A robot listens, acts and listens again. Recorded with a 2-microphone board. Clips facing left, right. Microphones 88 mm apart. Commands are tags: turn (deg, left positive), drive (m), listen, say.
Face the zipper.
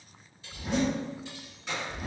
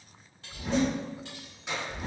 <turn deg="-35"/>
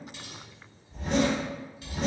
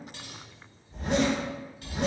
<turn deg="-110"/>
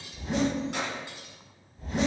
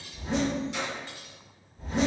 <turn deg="-35"/>
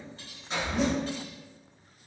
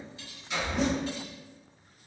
<say>Found it: a zipper, straight ahead.</say>